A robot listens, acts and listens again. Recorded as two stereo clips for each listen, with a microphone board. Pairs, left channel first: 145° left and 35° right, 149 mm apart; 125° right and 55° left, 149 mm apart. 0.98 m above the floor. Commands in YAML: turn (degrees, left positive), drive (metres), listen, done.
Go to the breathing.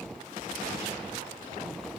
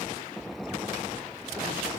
listen: true
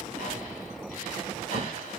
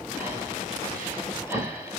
turn: 130
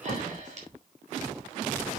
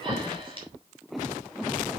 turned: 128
drive: 1.0
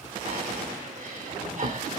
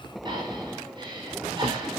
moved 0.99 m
drive: 1.0
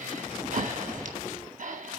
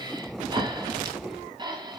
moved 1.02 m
drive: 1.0
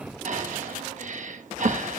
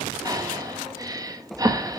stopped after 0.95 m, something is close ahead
turn: -10
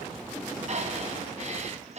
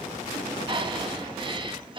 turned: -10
done: "I am next to the breathing."